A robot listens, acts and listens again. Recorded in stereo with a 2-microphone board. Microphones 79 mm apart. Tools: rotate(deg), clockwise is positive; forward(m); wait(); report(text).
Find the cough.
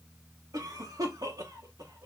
rotate(55)
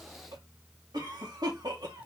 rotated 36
rotate(80)
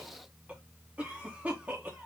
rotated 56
rotate(20)
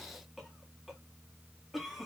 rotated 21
report("Facing the cough, 1 to 2 m away.")